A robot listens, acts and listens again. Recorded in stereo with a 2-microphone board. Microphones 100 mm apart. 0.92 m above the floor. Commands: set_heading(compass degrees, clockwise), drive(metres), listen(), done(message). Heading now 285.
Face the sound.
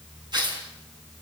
set_heading(330)
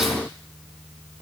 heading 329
listen()
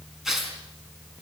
done("Found it: tearing paper, straight ahead.")